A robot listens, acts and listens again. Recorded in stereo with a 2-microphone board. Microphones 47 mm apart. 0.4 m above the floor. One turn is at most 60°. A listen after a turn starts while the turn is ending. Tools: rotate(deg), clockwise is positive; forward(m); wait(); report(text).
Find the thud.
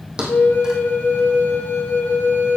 rotate(15)
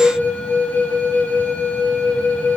wait()
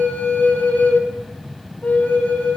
report("I heard a thud, but can't make it out now. It was about straight ahead or 150° right.")